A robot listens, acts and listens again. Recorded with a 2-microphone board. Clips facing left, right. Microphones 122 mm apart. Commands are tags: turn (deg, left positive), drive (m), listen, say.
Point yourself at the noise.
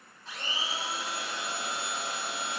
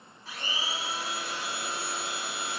<turn deg="-30"/>
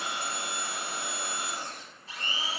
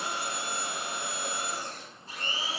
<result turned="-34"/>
<turn deg="-140"/>
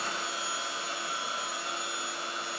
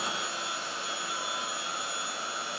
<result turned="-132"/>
<say>Facing the blender.</say>